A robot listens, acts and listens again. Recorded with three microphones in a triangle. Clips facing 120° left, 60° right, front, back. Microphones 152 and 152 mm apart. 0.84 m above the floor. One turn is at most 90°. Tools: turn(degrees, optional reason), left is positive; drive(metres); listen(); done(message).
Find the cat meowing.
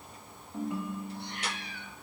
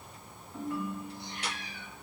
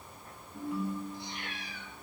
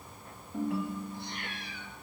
turn(degrees=90, reason="The cat meowing: 145° left.")
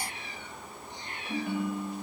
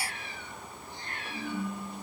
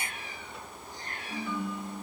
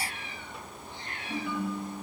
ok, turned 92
turn(degrees=50, reason="The cat meowing is now 50° left.")
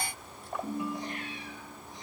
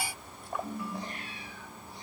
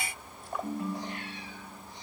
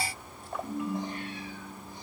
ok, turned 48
listen()
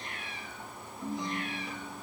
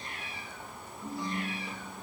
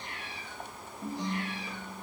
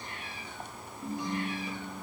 done("Found it: a cat meowing, straight ahead, over 4 m away.")